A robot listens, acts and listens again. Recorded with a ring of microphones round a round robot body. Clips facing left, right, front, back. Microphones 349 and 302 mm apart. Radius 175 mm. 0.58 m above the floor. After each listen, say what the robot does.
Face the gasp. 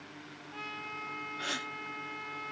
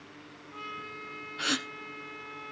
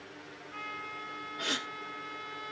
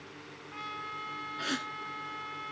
Turn 110° right.
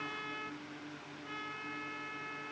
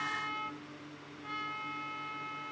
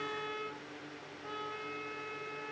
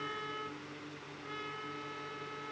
I heard a gasp from this way, but can't make it out now.